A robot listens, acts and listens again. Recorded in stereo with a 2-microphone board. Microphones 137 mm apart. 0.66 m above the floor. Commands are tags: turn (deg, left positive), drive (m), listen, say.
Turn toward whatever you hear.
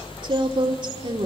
<turn deg="-35"/>
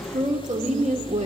<turn deg="-100"/>
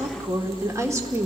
<turn deg="-25"/>
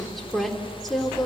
<say>Found it: a woman speaking, straight ahead.</say>